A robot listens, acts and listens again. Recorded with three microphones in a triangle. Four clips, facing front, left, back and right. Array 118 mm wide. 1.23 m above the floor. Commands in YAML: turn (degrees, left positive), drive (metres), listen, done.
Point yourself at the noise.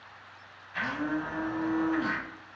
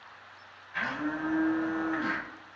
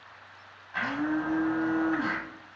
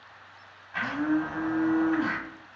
turn: -140
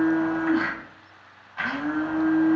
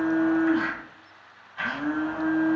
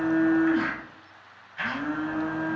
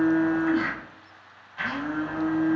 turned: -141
done: "Found it: a blender, straight ahead, 1 to 2 m away."